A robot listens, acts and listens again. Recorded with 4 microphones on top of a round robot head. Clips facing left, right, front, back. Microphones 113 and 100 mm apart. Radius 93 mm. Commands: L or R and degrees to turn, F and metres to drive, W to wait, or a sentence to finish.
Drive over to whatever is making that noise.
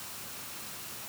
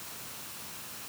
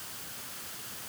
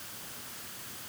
W
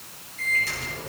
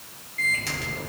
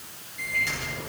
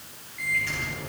R70
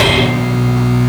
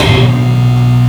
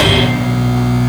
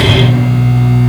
R20
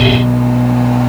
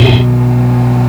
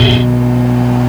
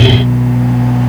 F1.0
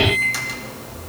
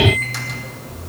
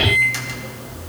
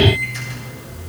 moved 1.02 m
F1.0
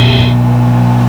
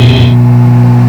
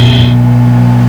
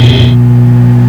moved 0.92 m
L10
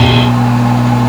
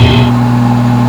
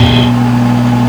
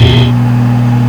F1.0
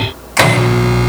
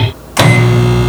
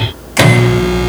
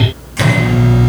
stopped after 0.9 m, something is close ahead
R10
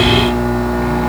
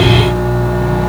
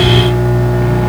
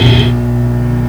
I am next to the microwave.